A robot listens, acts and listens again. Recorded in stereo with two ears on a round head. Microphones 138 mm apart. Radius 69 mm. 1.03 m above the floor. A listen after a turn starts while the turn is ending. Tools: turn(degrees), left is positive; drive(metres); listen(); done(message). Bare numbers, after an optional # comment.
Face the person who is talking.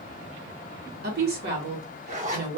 # The woman speaking: about 65° right or 115° right.
turn(-65)
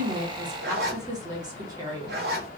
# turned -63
# So it is at 30° right.
turn(-30)
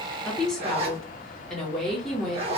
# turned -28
done("Found it: a woman speaking, straight ahead, 1 to 2 m away.")